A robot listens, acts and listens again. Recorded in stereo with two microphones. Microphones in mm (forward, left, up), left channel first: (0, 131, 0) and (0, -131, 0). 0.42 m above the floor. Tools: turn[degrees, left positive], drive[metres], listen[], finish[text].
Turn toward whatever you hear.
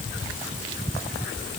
Action: listen[]
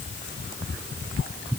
Action: listen[]
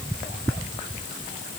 Action: finish[I can't make out anything to turn to.]